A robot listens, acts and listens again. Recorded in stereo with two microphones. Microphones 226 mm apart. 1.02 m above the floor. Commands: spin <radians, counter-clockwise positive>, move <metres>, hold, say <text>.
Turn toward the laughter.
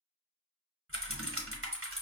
hold
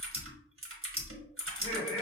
spin 1.13
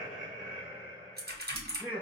say Facing the laughter, 2 to 4 m away.